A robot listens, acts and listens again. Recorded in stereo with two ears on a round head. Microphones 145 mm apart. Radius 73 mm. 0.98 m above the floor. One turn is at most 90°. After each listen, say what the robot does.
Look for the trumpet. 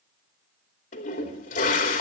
Keep listening.
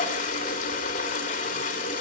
Keep listening.
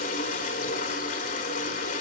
I can't make out a trumpet to turn to.